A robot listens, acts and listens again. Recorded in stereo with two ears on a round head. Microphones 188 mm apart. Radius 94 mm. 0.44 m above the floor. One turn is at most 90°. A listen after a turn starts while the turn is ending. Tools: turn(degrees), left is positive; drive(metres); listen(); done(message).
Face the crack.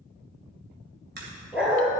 turn(degrees=-50)
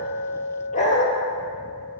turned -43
listen()
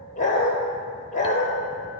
done("I heard a crack, but can't make it out now. It was about 5° right or 85° right.")